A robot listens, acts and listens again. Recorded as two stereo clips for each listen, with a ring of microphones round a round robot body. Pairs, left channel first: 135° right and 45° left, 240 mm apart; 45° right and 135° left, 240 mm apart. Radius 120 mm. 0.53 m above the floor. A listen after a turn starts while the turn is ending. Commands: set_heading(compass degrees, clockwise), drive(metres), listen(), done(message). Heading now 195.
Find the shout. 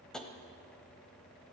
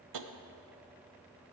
listen()
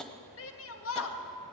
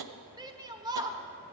set_heading(350)
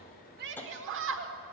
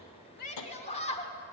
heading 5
set_heading(350)
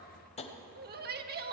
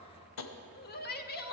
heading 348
done("Found it: a shout, straight ahead, 1 to 2 m away.")